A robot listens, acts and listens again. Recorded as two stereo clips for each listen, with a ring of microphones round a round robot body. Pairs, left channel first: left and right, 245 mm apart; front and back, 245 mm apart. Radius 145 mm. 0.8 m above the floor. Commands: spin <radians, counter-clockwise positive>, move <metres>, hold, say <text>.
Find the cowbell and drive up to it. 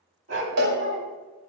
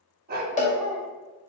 spin -1.05
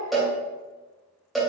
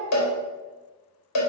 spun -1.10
move 1.0
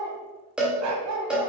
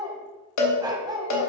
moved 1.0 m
move 1.0
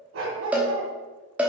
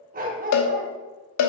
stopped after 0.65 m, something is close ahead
say Arrived at the cowbell, straight ahead.